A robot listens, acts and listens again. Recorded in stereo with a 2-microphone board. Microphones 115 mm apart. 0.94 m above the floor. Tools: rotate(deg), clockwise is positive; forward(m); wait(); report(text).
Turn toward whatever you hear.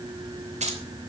rotate(90)
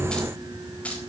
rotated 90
wait()
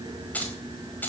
rotate(-15)
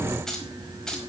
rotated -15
report("Found it: keys jangling, straight ahead, over 4 m away.")